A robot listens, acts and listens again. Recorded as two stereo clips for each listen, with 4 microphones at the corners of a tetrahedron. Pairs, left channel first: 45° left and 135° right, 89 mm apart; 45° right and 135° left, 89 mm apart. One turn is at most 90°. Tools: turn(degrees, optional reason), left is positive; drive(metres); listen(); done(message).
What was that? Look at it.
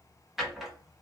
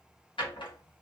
turn(degrees=-50, reason="The drawer: 50° right.")
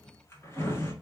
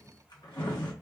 turn(degrees=-10, reason="The drawer is now 10° right.")
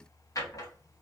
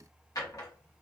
done("Found it: a drawer, straight ahead.")